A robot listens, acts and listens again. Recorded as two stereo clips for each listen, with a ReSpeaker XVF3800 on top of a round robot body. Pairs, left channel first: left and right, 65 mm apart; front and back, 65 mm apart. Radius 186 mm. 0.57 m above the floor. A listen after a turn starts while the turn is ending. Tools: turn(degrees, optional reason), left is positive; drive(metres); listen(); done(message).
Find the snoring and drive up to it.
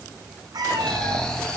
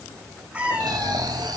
turn(degrees=170, reason="The snoring: 170° left.")
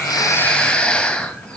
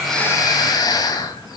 turn(degrees=15, reason="The snoring is now 15° left.")
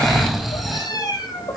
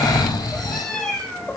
drive(metres=1.0)
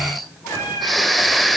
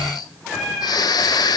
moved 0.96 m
drive(metres=1.0)
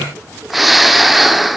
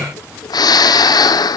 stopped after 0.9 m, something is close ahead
done("I am next to the snoring.")